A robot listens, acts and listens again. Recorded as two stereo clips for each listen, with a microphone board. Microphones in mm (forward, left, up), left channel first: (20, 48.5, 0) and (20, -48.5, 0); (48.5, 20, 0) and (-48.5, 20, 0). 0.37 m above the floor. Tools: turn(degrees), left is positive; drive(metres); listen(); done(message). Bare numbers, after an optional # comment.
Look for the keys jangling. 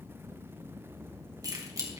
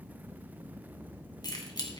# The keys jangling: 40° right.
turn(-40)
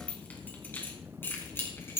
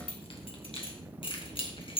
# The keys jangling is now 25° left.
turn(25)
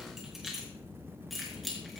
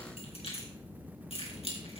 done("Found it: keys jangling, straight ahead, over 4 m away.")